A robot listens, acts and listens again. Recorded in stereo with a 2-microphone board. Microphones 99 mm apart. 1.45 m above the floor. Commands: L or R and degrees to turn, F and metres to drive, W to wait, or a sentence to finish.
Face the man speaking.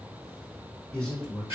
L30
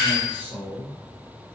R20
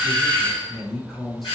Found it: a man speaking, straight ahead.